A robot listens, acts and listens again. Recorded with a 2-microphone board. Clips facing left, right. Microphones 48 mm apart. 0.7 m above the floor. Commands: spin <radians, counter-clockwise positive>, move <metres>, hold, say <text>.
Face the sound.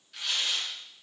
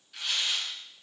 spin -0.52
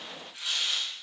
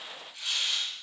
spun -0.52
spin 0.52
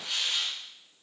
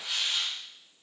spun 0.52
spin -0.17
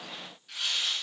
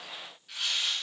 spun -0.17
say Facing the tearing paper.